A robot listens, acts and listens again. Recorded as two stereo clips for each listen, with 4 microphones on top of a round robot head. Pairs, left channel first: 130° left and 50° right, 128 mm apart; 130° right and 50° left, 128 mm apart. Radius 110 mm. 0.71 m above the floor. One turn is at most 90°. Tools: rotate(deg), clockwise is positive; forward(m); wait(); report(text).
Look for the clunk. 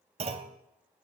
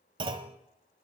report("Found it: a clunk, straight ahead, under 1 m away.")